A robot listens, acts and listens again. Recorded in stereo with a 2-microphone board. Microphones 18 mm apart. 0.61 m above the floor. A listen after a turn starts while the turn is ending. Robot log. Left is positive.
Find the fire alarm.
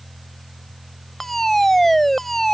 cmd yaw +30
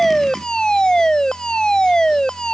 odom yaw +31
note: So it is at 135° left.
cmd yaw +135
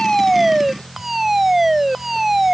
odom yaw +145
note: The fire alarm is now 10° right.
cmd yaw -10
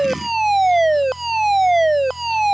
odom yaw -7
end: Found it: a fire alarm, straight ahead.